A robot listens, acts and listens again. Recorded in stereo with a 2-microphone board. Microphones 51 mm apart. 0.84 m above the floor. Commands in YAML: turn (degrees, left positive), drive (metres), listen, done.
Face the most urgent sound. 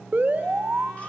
turn: -40
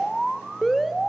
done: "Facing the alarm."